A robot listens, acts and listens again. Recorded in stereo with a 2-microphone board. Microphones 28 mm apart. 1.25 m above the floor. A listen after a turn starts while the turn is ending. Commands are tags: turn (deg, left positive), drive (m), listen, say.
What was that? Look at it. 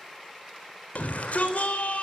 <turn deg="90"/>
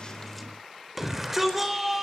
<say>Found it: a shout, straight ahead, over 4 m away.</say>